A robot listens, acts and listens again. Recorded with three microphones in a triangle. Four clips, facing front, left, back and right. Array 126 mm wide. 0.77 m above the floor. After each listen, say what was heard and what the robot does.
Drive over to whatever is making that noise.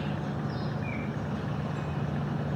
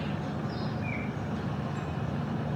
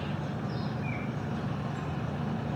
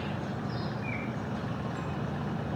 Keep listening.
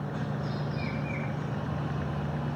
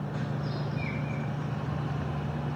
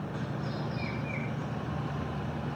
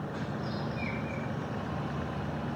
Keep listening.
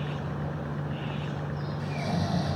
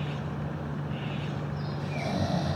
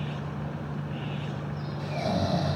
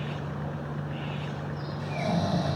The snoring: straight behind. Turn 180° left.
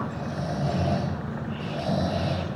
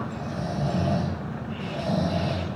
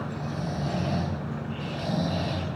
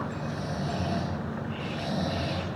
The snoring is now 30° left. Turn 30° left.
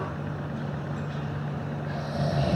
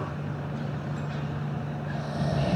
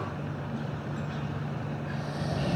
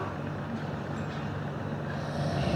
Drive 1.0 m forward.
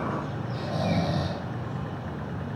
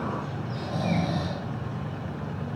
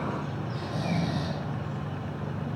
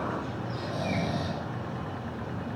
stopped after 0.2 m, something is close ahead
Something is in my way. I am facing the snoring but have not reached it.